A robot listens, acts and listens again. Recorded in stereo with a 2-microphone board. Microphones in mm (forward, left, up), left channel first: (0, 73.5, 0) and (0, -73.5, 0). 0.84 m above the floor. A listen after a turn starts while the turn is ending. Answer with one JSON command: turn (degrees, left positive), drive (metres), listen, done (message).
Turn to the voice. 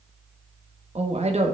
{"turn": -45}
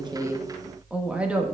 {"turn": -10}
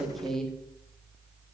{"done": "Facing the woman speaking, 1 to 2 m away."}